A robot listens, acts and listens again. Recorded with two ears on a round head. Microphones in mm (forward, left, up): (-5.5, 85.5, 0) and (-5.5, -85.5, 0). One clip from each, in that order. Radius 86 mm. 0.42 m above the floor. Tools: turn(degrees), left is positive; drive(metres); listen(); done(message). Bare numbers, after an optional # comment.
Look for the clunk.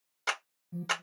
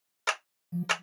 listen()
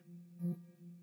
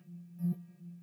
listen()
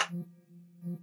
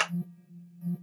done("I can't make out a clunk, only an alarm and a clap.")